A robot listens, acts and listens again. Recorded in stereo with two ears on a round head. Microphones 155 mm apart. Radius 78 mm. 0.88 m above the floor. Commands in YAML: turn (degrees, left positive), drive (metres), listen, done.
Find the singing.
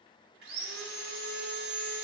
listen: true
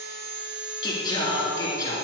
turn: 20
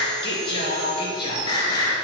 turn: 25
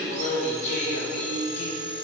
turn: 135
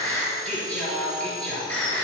done: "Found it: singing, straight ahead, 2 to 4 m away."